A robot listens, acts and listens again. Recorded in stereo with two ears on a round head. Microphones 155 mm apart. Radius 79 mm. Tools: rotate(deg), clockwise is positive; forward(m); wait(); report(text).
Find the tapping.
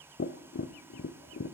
rotate(-65)
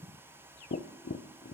rotate(-50)
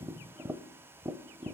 rotate(10)
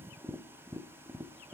report("Facing the tapping, under 1 m away.")